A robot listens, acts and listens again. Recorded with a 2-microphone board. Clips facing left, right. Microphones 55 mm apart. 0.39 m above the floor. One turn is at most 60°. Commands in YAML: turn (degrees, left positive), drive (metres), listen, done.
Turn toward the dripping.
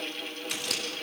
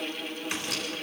listen: true
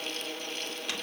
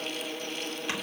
listen: true
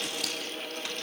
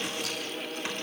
done: "I can't make out dripping to turn to."